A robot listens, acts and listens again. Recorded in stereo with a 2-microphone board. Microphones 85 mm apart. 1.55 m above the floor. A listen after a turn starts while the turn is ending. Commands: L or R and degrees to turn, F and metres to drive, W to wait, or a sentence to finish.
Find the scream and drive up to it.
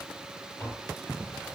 W
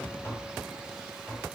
W
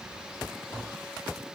I can't make out a scream, only tapping.